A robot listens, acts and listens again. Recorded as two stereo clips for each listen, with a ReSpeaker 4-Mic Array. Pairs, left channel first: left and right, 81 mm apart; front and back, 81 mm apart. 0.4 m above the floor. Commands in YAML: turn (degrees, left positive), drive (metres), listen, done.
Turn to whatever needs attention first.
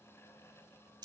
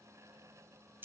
listen: true
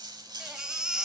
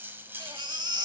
turn: -170
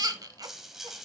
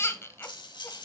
turn: -55
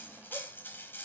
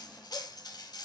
listen: true
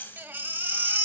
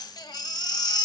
turn: -25
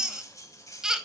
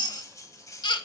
turn: -10
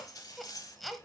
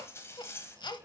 done: "Facing the baby crying."